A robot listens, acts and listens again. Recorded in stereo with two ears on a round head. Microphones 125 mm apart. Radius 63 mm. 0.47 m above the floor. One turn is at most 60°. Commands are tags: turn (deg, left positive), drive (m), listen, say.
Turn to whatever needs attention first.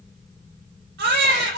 <turn deg="-60"/>
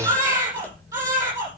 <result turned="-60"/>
<turn deg="-20"/>
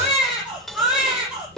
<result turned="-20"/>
<say>Facing the baby crying, over 4 m away.</say>